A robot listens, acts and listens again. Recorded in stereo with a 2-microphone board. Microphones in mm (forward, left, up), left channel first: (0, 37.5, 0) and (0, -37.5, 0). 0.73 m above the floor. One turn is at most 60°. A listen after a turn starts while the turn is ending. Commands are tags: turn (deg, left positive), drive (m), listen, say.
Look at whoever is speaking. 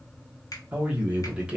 <turn deg="-30"/>
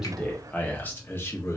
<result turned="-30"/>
<turn deg="35"/>
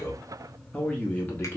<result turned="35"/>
<turn deg="30"/>
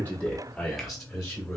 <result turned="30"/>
<turn deg="10"/>
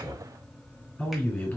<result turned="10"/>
<turn deg="15"/>
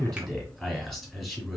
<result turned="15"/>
<say>Facing the man speaking, 1 to 2 m away.</say>